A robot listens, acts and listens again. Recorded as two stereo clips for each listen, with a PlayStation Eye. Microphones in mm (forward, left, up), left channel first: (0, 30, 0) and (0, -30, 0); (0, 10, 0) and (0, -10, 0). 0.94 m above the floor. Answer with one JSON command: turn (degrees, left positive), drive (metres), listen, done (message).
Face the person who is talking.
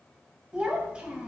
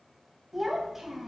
{"turn": -15}
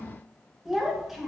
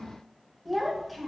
{"done": "Facing the child speaking, under 1 m away."}